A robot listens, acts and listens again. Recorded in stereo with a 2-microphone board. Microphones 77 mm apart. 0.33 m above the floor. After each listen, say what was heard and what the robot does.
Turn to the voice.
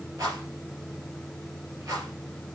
Keep listening.
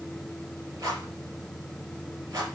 Keep listening.
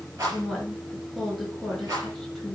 Turn 30° left.
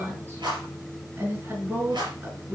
So it is at 30° right. Turn 30° right.
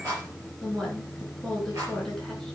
Facing the woman speaking, over 4 m away.